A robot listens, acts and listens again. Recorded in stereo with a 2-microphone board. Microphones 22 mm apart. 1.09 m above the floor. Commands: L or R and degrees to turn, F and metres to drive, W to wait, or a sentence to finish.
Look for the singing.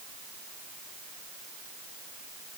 W
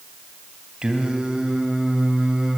R35
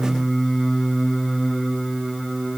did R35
Facing the singing.